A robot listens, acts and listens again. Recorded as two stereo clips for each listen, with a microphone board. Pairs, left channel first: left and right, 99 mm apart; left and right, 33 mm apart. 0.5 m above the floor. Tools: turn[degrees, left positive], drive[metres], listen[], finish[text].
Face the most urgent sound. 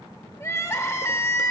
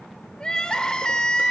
Thought: The crying: about 30° left or 150° left.
Action: turn[30]
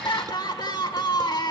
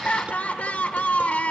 Thought: So it is at 115° left.
Action: turn[115]
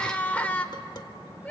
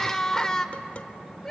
Thought: The crying is now 20° left.
Action: turn[20]
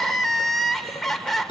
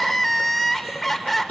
Action: finish[Found it: crying, straight ahead, 1 to 2 m away.]